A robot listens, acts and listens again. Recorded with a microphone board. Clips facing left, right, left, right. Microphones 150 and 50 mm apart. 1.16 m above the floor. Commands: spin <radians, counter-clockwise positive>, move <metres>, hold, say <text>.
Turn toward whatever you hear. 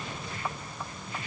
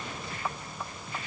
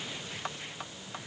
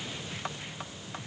hold
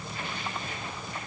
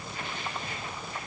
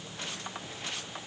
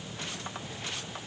hold
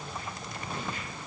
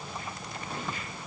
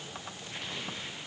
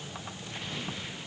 say I can't make out anything to turn to.